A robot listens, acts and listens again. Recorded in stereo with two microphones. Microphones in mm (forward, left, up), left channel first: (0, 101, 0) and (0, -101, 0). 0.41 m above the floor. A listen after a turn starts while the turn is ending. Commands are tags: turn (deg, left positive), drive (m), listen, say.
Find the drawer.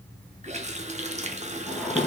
<turn deg="30"/>
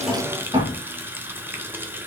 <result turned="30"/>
<turn deg="-25"/>
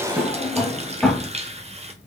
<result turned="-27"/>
<say>Found it: a drawer, straight ahead.</say>